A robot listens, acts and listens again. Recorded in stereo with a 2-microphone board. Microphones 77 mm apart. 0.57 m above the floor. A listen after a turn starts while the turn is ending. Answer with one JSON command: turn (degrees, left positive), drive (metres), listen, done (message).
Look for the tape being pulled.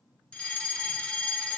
{"listen": true}
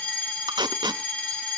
{"turn": -70}
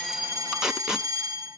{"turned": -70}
{"done": "Facing the tape being pulled, under 1 m away."}